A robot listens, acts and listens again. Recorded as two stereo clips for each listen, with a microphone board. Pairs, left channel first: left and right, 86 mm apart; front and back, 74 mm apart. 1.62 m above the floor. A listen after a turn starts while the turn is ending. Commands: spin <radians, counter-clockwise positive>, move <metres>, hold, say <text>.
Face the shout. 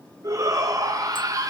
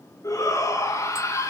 spin -0.79
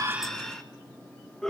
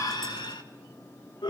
say Facing the shout.